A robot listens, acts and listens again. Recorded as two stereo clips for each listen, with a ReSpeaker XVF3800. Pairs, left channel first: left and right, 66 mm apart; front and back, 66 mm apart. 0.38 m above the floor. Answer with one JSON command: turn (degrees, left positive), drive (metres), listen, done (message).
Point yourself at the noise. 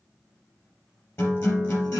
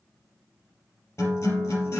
{"turn": 45}
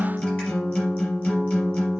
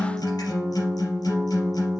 {"turn": 20}
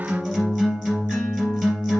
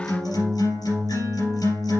{"done": "Found it: a guitar, straight ahead, 2 to 4 m away."}